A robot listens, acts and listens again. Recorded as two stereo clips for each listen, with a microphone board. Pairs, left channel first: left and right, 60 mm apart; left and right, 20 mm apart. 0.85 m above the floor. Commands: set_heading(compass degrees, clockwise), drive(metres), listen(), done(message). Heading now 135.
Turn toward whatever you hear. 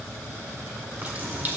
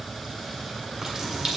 set_heading(165)
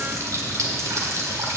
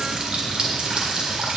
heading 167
set_heading(287)
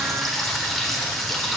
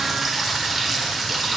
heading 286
done("Found it: a running tap, straight ahead.")